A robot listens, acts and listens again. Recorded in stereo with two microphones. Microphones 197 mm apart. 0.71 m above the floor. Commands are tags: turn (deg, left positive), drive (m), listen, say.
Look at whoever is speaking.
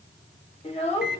<turn deg="30"/>
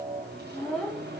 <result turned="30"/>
<say>Found it: a child speaking, straight ahead.</say>